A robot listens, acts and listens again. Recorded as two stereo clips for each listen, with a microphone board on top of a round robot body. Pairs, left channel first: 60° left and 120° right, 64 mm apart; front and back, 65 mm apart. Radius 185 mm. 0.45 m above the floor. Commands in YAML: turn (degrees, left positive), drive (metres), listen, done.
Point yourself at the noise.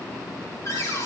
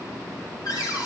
turn: 20
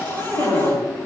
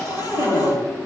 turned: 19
done: "Facing the cupboard door, over 4 m away."